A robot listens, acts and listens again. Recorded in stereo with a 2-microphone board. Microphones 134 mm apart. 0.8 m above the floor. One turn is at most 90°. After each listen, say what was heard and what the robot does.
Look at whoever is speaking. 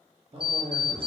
The man speaking: about 40° right or 140° right. Turn 40° right.
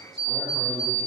Keep listening.
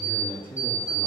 So it is at 15° left. Turn 15° left.
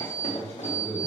The man speaking is now 25° left. Turn 25° left.
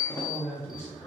The man speaking is now 20° left. Turn 20° left.
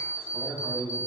The man speaking is now 20° left. Turn 20° left.
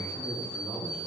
Found it: a man speaking, straight ahead, 1 to 2 m away.